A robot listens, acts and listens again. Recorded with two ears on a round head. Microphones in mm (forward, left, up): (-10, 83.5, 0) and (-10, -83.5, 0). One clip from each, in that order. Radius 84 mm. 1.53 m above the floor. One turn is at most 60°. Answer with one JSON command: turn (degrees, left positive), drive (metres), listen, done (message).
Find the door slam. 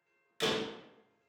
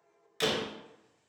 {"turn": -30}
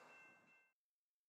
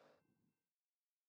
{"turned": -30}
{"listen": true}
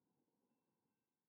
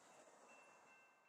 {"done": "I heard a door slam, but can't make it out now. It was about 20° left or 140° right."}